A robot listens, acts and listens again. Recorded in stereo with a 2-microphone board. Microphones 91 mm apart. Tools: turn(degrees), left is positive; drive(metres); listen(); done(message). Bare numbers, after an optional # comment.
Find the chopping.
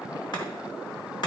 # The chopping: about 50° left or 130° left.
turn(50)
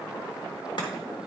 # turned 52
listen()
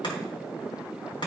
# So it is at 70° left.
turn(70)
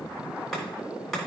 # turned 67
done("Found it: chopping, straight ahead, 2 to 4 m away.")